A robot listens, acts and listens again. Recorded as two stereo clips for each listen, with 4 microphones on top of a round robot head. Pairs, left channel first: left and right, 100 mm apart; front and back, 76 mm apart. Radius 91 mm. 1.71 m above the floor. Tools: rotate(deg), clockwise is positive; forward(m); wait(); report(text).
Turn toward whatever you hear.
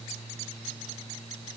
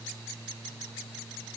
wait()
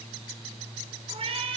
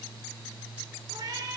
rotate(120)
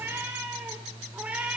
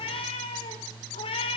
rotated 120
rotate(10)
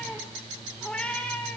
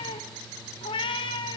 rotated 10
rotate(-10)
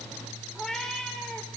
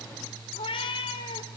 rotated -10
report("Found it: a cat meowing, straight ahead.")